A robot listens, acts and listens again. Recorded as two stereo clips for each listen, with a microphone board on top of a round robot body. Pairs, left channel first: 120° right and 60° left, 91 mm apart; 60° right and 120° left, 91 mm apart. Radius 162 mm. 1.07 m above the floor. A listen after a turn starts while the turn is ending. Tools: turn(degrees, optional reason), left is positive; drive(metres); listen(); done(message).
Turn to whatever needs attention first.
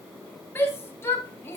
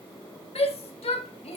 turn(degrees=-55, reason="The shout: 55° right.")
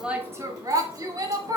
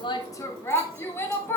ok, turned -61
done("Found it: a shout, straight ahead, 1 to 2 m away.")